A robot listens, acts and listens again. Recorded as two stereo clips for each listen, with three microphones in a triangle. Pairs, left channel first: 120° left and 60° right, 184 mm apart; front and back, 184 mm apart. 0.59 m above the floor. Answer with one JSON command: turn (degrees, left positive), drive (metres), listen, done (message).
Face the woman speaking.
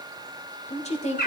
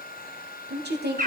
{"turn": 165}
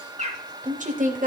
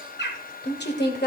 {"turn": -20}
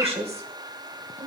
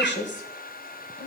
{"turn": -10}
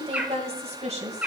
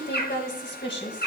{"done": "Facing the woman speaking."}